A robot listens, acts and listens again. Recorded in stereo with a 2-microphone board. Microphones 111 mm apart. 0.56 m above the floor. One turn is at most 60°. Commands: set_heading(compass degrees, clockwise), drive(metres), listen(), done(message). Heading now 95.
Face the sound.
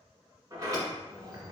set_heading(130)
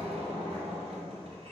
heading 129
set_heading(189)
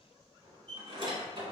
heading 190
set_heading(240)
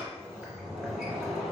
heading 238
done("Facing the sliding door, 1 to 2 m away.")